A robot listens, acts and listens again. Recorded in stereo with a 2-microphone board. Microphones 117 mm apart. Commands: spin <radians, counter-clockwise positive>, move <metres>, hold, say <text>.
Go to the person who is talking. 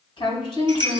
spin 0.79
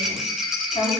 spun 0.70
spin 1.48
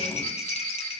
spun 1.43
hold
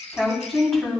move 1.0
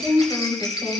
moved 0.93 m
spin 0.17
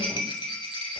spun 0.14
hold
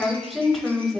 move 1.0
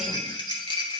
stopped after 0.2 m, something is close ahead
hold
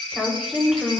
say I am next to the woman speaking.